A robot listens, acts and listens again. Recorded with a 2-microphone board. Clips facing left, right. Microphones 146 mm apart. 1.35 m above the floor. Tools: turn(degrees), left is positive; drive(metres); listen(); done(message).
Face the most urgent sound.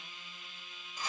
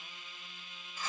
listen()
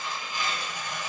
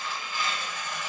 listen()
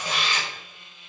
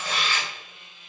done("I can't make out anything urgent, only tearing paper.")